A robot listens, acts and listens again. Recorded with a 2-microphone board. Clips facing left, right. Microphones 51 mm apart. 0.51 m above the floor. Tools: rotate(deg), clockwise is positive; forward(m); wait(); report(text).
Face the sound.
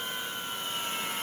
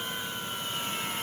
wait()
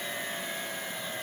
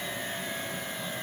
wait()
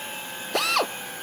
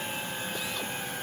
rotate(-75)
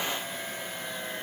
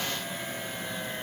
wait()
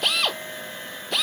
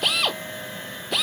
report("Facing the drill.")